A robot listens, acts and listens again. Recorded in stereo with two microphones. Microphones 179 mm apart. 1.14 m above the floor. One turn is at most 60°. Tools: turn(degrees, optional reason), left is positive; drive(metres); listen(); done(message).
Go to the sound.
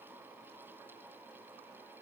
listen()
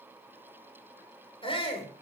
turn(degrees=30, reason="The shout: about 30° left or 150° left.")
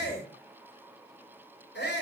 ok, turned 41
turn(degrees=60, reason="So it is at 110° left.")
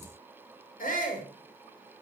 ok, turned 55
turn(degrees=50, reason="The shout is now 50° left.")
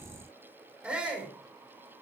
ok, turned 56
drive(metres=1.0)
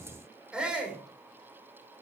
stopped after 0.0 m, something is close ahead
done("Something is in my way. I am facing the shout but have not reached it.")